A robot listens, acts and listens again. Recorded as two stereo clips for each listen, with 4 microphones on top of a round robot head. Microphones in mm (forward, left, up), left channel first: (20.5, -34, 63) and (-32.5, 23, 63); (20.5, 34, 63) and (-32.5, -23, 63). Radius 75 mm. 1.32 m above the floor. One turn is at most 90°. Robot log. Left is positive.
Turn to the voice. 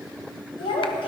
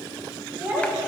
note: The child speaking: 65° right.
cmd yaw -65
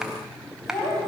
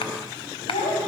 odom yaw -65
note: The child speaking is now 10° left.
cmd yaw +10
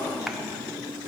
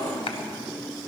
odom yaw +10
cmd idle
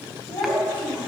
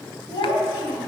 end: Found it: a child speaking, straight ahead.